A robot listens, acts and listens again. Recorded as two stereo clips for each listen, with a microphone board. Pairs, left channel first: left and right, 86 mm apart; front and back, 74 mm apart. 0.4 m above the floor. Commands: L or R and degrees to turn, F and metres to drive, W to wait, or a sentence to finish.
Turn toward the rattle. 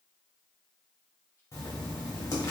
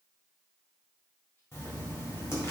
W
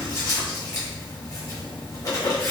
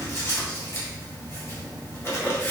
W
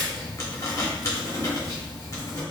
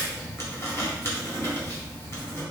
I can't make out a rattle, only writing.